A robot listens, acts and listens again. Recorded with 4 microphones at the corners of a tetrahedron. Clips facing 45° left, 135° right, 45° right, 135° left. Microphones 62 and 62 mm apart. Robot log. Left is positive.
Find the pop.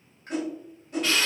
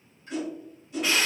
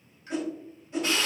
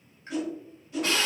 note: The pop: 75° left.
cmd yaw +75
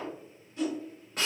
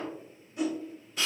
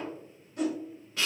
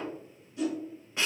end: I heard a pop from this way, but can't make it out now.